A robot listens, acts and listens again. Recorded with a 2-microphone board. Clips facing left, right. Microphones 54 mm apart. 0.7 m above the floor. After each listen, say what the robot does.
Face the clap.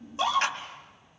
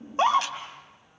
Turn 40° left.
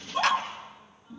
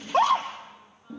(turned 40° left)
Keep listening.
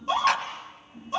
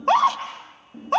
Keep listening.
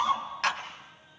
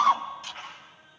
Turn 100° left.
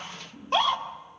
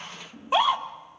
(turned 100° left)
Keep listening.
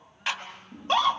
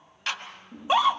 Turn 15° left.
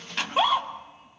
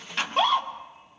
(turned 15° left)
Found it: a clap, straight ahead.